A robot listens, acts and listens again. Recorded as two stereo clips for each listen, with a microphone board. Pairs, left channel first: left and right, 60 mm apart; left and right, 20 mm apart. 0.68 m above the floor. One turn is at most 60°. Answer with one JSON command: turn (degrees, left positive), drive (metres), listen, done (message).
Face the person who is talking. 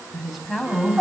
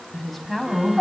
{"turn": 30}
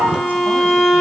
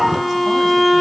{"listen": true}
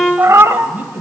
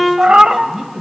{"turn": -30}
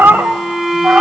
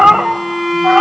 {"listen": true}
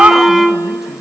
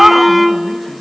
{"listen": true}
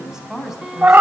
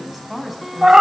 {"turn": -10}
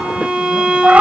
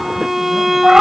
{"listen": true}
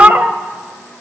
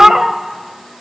{"listen": true}
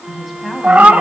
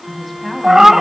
{"done": "Facing the woman speaking, 2 to 4 m away."}